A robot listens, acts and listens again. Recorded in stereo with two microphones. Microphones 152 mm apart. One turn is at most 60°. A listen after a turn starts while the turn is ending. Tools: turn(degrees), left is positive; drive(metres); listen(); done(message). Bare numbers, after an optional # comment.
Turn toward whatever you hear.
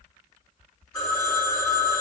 # The phone ringing: about 25° left or 155° left.
turn(25)
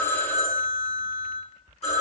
# So it is at 130° left.
turn(60)
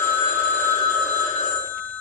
# The phone ringing is now 70° left.
turn(60)
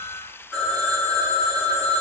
# The phone ringing is now 10° left.
turn(10)
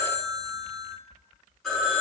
done("Facing the phone ringing.")